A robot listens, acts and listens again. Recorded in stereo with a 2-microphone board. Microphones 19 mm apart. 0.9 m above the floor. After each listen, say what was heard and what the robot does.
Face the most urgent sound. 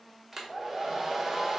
Keep listening.
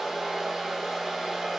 Keep listening.
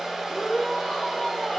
The shout: about 45° left or 135° left. Turn 45° left.
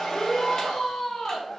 So it is at 85° left. Turn 85° left.
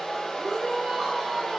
The shout is now 30° right. Turn 30° right.
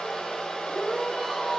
Found it: a shout, straight ahead.